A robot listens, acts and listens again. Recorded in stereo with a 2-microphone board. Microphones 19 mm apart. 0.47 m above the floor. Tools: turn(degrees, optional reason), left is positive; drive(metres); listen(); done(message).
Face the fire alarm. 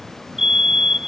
turn(degrees=-25, reason="The fire alarm: about 25° right or 155° right.")
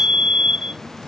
turn(degrees=-130, reason="So it is at 130° right.")
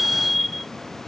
done("Facing the fire alarm.")